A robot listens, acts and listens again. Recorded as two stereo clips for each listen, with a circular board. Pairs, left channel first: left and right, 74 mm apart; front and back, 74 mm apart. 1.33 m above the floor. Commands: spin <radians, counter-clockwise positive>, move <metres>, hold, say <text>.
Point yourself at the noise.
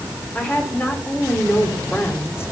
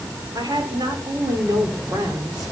spin 2.53
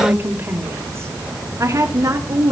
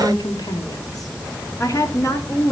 spin -0.87
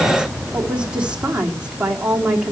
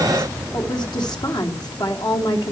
spin -0.26
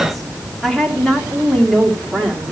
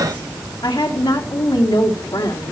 say Facing the woman speaking.